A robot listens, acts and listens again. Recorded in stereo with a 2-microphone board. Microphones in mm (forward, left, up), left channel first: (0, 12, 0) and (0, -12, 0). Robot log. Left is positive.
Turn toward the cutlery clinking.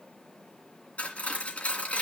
note: The cutlery clinking: about 70° left or 110° left.
cmd yaw +70
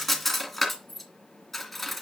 end: Found it: cutlery clinking, straight ahead, 2 to 4 m away.